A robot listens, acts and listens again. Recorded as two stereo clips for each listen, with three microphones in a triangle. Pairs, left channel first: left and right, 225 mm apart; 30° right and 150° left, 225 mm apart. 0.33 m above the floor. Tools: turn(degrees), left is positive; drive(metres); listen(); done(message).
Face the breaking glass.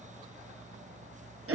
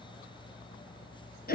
listen()
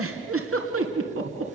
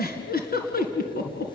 listen()
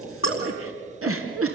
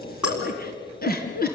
turn(degrees=65)
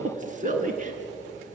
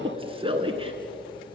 done("Facing where the breaking glass came from. I can't hear it now.")